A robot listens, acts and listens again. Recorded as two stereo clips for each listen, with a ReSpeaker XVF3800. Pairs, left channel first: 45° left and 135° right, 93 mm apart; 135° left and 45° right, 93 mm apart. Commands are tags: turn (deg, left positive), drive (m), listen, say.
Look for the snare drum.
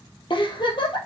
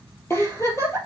<listen/>
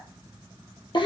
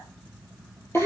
<listen/>
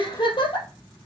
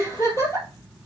<say>I can't make out a snare drum, only a giggle.</say>